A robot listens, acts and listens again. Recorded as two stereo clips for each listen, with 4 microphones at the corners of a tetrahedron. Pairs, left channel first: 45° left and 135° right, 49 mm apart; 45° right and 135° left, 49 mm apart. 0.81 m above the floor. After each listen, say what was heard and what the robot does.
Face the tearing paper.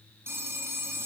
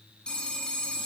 Keep listening.
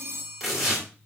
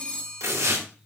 The tearing paper: 130° left. Turn 130° left.
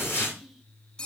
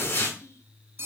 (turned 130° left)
Facing the tearing paper.